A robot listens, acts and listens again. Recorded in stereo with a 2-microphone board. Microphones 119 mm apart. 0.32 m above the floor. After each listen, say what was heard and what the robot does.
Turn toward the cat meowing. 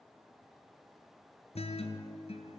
Keep listening.
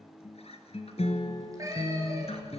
The cat meowing: about 30° right or 150° right. Turn 30° right.
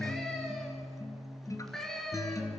Facing the cat meowing.